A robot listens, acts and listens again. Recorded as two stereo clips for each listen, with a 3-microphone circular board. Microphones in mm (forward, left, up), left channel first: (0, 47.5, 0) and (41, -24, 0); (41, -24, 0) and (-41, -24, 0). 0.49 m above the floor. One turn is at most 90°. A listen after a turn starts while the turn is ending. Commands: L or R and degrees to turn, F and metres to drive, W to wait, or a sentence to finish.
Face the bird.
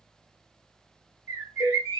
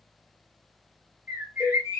R90
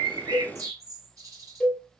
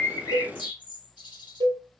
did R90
R15
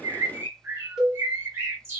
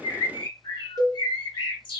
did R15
Found it: a bird, straight ahead, 1 to 2 m away.